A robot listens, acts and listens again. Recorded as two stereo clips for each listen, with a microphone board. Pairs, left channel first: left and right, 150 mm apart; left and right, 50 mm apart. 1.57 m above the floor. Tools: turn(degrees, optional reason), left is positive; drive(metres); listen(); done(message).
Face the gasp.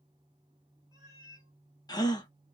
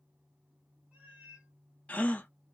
turn(degrees=25, reason="The gasp: about 25° left or 155° left.")
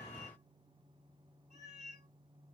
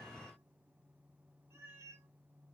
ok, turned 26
listen()
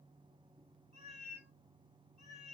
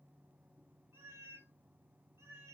done("I heard a gasp, but can't make it out now. It was about straight ahead or 130° left.")